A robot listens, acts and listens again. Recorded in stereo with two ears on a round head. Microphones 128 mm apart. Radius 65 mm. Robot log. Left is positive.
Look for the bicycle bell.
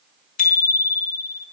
note: The bicycle bell: about 55° left or 125° left.
cmd yaw +55
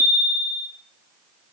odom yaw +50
end: Facing the bicycle bell.